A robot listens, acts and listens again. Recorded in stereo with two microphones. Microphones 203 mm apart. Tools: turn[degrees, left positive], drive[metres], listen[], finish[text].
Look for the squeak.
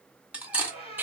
Thought: The squeak: about 30° left or 150° left.
Action: turn[30]
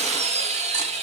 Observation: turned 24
Action: listen[]
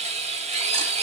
Action: listen[]
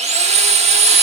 Action: finish[I heard a squeak, but can't make it out now. It was about 5° left or 130° left.]